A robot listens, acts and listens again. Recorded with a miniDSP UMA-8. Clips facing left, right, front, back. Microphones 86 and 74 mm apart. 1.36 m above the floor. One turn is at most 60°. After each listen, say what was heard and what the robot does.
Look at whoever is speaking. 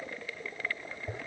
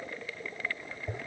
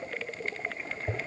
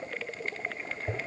Keep listening.
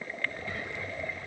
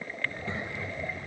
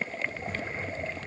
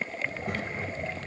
The child speaking: 155° right. Turn 60° right.
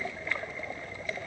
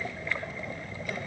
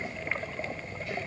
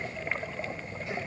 The child speaking is now 110° right. Turn 60° right.
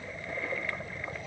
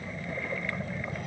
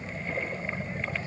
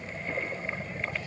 The child speaking is now 60° right. Turn 60° right.
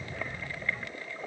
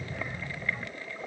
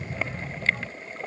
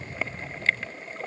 The child speaking is now 10° right. Turn 10° right.
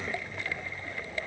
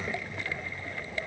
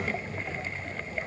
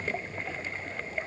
Found it: a child speaking, straight ahead.